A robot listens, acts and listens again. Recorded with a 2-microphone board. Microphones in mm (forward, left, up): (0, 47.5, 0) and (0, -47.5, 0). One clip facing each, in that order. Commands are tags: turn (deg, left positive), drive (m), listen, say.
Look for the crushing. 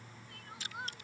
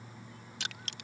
<turn deg="-75"/>
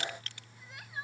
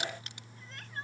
<turn deg="-20"/>
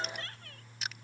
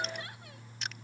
<say>Facing the crushing.</say>